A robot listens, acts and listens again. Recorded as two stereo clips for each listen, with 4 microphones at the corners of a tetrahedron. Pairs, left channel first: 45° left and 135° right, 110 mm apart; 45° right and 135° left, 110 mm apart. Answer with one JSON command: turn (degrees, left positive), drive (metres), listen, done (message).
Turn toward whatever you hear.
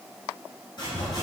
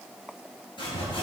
{"done": "Facing the sawing, 1 to 2 m away."}